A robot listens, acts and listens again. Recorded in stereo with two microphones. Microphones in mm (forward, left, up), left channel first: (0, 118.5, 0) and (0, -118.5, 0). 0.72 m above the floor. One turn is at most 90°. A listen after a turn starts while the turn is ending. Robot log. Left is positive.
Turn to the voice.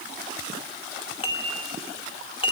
cmd idle
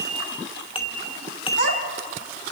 cmd yaw +90
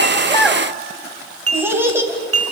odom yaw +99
note: So it is at 10° right.
cmd yaw -10
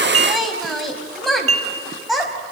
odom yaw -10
end: Facing the child speaking, 2 to 4 m away.